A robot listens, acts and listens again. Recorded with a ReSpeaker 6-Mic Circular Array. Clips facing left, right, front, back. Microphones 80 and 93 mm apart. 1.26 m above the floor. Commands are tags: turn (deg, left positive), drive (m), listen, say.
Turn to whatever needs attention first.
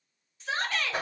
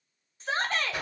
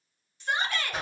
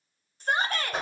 <turn deg="-135"/>
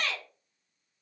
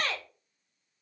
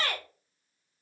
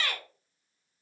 <turn deg="-45"/>
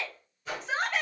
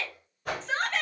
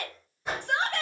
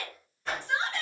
<turn deg="10"/>
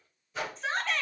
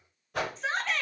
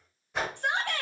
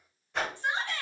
<say>Found it: a shout, straight ahead.</say>